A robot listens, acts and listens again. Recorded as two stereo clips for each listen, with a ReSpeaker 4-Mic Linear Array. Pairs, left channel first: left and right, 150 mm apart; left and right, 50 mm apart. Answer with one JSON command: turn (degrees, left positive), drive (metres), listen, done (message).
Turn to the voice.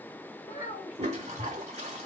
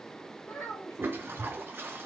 {"turn": 60}
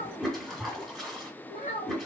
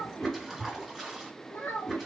{"turn": 60}
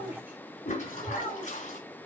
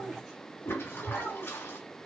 {"turn": -10}
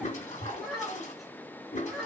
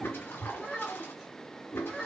{"done": "Facing the child speaking."}